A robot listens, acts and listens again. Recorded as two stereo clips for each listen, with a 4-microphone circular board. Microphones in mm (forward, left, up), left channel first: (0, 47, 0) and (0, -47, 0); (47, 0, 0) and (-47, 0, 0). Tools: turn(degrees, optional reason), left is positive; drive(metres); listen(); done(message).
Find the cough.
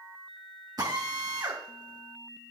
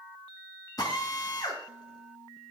listen()
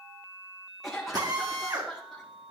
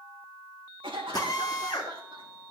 turn(degrees=175, reason="The cough: 175° left.")
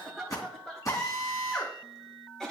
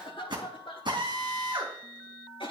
done("Facing the cough.")